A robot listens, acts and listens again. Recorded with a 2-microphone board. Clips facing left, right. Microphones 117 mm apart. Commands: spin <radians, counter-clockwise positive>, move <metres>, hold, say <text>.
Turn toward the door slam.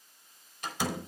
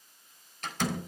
spin 0.52
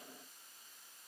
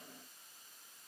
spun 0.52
hold
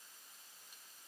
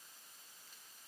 say I heard a door slam, but can't make it out now. It was about 20° right or 140° left.